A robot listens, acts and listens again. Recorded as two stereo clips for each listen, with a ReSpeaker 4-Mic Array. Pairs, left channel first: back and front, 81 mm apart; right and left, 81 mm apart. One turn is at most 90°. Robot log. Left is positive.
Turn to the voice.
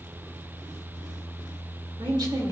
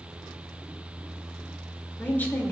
note: The woman speaking: 25° right.
cmd yaw -25
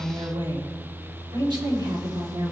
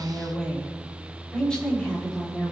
note: The woman speaking is now 15° right.
cmd yaw -15
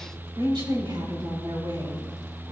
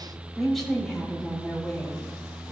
end: Facing the woman speaking.